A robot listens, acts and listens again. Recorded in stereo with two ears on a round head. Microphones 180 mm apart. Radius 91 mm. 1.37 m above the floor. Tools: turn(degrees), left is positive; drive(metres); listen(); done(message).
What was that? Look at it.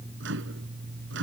turn(degrees=-65)
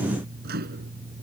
turn(degrees=-50)
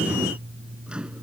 done("Found it: a microwave, straight ahead.")